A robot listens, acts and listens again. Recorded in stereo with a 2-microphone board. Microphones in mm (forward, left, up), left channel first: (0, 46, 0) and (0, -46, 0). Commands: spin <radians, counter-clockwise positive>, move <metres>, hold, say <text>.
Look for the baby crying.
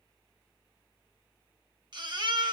spin -0.87
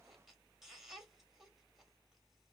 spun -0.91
say Facing the baby crying.